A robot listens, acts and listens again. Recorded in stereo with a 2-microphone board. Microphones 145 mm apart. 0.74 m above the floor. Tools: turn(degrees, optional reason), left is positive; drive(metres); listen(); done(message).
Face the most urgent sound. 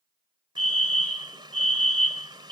turn(degrees=65, reason="The fire alarm: about 65° left or 115° left.")
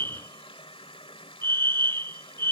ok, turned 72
turn(degrees=15, reason="So it is at 15° left.")
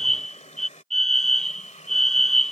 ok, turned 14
done("Facing the fire alarm.")